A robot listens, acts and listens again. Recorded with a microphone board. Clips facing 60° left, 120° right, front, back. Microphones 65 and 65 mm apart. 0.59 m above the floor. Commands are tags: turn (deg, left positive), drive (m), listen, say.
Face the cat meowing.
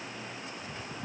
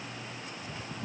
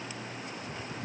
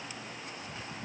<listen/>
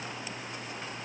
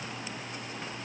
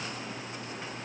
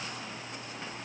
<listen/>
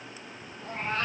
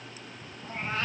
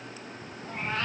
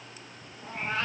<turn deg="100"/>
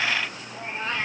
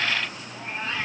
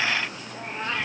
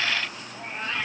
<turn deg="15"/>
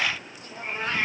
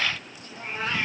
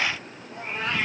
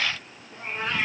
<say>Found it: a cat meowing, straight ahead.</say>